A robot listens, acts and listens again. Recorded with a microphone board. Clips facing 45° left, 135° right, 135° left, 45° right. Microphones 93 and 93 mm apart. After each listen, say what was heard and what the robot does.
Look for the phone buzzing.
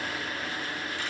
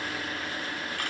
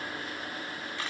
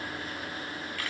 Keep listening.
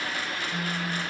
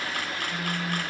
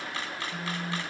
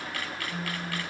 The phone buzzing: 90° right. Turn 90° right.
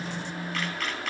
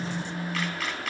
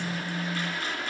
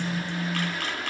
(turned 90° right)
The phone buzzing is now 20° left. Turn 20° left.
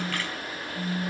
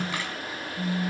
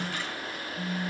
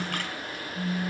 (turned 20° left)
Found it: a phone buzzing, straight ahead, 2 to 4 m away.